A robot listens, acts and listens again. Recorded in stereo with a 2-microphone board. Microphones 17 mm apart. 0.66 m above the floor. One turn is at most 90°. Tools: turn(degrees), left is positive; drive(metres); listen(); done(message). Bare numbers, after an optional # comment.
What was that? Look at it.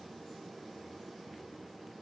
listen()
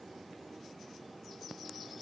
listen()
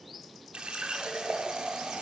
# The running tap: about 70° right or 110° right.
turn(-70)
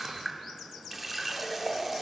# So it is at 10° right.
turn(-10)
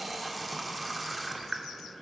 done("Found it: a running tap, straight ahead, 1 to 2 m away.")